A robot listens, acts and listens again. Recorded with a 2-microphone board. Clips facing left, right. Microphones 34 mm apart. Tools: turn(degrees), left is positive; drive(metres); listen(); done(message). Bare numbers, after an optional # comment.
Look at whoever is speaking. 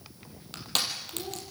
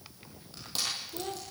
# The child speaking: about 40° right or 140° right.
turn(-40)
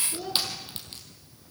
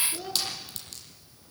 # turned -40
done("Facing the child speaking, 2 to 4 m away.")